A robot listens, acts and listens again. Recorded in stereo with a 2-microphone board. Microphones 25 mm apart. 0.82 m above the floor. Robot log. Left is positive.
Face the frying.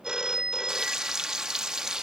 note: The frying: about 35° right or 145° right.
cmd yaw -35
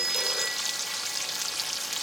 end: Found it: frying, straight ahead, 1 to 2 m away.